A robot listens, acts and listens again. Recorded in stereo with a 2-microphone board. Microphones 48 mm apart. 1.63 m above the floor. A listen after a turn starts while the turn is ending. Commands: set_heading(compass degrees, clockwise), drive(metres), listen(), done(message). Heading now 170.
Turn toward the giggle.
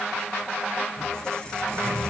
listen()
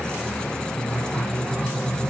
listen()
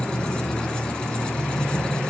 done("I can't make out a giggle to turn to.")